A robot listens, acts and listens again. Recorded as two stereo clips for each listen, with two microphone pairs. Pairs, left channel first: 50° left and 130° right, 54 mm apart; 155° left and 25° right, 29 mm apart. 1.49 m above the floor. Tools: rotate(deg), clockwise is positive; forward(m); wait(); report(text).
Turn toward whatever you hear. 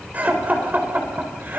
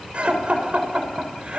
rotate(75)
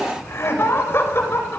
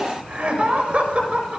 rotate(-10)
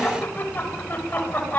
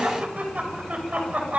report("Facing the laughter.")